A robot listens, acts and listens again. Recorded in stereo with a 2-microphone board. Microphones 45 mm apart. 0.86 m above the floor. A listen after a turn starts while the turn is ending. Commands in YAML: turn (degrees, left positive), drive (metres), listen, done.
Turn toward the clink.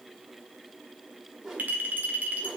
turn: -40
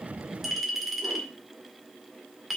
done: "Facing the clink."